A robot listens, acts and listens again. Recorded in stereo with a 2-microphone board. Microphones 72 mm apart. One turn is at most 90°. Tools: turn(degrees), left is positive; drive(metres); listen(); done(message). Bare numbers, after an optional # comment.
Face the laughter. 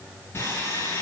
listen()
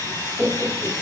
turn(-30)
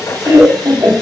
# So it is at 145° right.
turn(-90)
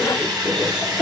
# The laughter is now 65° right.
turn(-65)
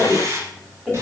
done("Facing the laughter.")